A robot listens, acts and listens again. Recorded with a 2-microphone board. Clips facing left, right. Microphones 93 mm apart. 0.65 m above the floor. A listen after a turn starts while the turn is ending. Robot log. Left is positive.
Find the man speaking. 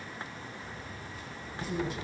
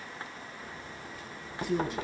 note: The man speaking: about 65° right or 115° right.
cmd yaw -65
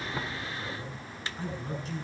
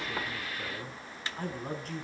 note: So it is at 55° right.
cmd yaw -55
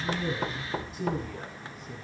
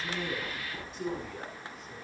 end: Found it: a man speaking, straight ahead.